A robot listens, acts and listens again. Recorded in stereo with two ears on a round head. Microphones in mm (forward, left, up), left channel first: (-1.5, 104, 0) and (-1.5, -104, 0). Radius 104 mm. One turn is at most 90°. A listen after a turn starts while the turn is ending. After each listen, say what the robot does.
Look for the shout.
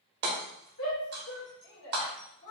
Turn 60° left.
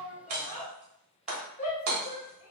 Turn 35° left.
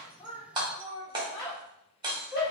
Turn 10° right.
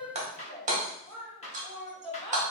Found it: a shout, straight ahead.